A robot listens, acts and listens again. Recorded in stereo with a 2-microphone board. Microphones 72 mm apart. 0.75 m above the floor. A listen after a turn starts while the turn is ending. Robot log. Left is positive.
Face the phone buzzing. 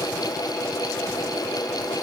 cmd idle
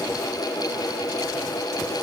cmd idle
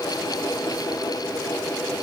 end: I can't make out a phone buzzing to turn to.